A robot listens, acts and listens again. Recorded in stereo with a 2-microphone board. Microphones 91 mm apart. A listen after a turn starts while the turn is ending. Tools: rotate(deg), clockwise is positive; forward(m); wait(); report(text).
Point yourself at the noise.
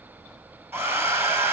rotate(25)
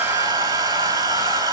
rotate(130)
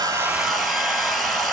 report("Facing the hair dryer.")